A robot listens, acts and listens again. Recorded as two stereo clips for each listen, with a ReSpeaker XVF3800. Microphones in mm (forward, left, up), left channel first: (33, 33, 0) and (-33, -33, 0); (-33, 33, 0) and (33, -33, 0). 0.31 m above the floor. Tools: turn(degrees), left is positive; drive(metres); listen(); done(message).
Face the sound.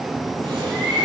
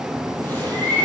turn(degrees=-155)
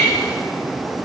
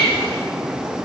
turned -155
done("Facing the bird.")